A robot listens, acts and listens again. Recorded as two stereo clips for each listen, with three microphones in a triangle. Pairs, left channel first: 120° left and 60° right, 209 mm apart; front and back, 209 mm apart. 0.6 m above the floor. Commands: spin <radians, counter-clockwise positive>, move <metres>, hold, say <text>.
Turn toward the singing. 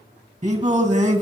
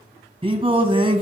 spin -2.01
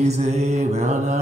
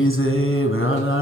say Found it: singing, straight ahead, 1 to 2 m away.